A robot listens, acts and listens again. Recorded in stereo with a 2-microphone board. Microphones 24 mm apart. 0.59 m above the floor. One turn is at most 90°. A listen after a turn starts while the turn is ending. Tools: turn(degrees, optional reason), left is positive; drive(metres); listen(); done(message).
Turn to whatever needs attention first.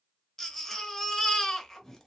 turn(degrees=15, reason="The baby crying: about 15° left or 165° left.")
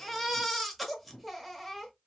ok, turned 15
done("Found it: a baby crying, straight ahead, 1 to 2 m away.")